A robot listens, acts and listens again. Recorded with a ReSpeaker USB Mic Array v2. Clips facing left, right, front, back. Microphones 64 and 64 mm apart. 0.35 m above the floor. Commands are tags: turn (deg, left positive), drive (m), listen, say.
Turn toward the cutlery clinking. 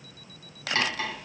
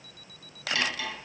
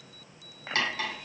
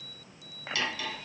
<turn deg="45"/>
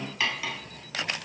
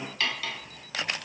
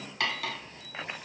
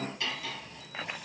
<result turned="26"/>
<turn deg="15"/>
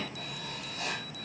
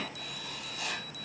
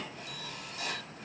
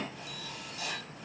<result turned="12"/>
<listen/>
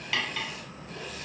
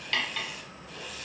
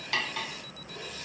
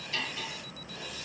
<say>Found it: cutlery clinking, straight ahead, 1 to 2 m away.</say>